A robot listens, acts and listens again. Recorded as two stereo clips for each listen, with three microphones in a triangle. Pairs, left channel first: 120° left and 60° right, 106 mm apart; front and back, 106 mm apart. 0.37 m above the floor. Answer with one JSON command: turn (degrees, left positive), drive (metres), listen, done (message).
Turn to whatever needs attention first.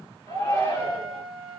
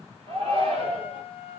{"turn": 175}
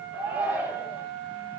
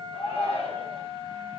{"turn": 10}
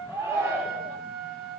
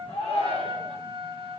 {"done": "Found it: a shout, straight ahead, 2 to 4 m away."}